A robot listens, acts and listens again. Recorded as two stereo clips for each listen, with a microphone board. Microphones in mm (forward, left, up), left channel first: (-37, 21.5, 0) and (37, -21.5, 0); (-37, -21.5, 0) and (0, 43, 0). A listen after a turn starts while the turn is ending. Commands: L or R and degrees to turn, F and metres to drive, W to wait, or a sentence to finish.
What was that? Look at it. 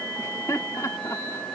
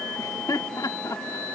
R155
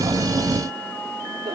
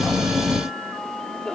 R40
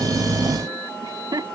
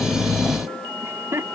Facing the laughter.